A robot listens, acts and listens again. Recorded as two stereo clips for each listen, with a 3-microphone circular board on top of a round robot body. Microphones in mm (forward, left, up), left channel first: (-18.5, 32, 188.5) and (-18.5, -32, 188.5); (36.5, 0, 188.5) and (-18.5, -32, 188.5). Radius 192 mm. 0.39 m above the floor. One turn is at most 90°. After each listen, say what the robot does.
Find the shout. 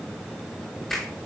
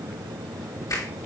Keep listening.
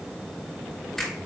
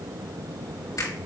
Keep listening.
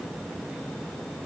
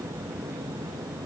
I can't make out a shout to turn to.